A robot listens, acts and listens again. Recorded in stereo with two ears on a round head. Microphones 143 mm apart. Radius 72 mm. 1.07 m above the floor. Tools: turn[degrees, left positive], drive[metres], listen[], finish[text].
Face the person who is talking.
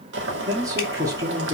Thought: The man speaking: about 20° right or 160° right.
Action: turn[-20]
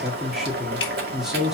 Action: finish[Found it: a man speaking, straight ahead, 2 to 4 m away.]